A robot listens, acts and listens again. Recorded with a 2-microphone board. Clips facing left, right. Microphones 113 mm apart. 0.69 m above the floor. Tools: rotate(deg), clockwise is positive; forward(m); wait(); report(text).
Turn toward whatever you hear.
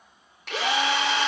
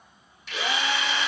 rotate(-65)
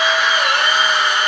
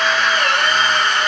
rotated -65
rotate(-15)
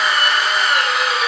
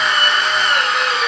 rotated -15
report("Found it: a drill, straight ahead.")